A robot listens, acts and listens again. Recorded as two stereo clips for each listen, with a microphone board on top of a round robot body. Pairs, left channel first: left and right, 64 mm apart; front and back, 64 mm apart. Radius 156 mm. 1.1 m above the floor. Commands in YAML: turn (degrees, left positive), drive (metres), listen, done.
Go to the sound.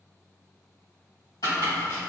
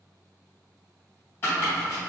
turn: 60
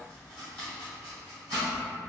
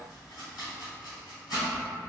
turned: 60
turn: 20
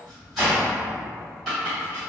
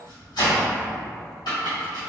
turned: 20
drive: 1.0
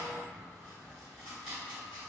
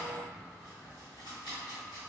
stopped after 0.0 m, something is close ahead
done: "Something is in my way. I am facing the chopping but have not reached it."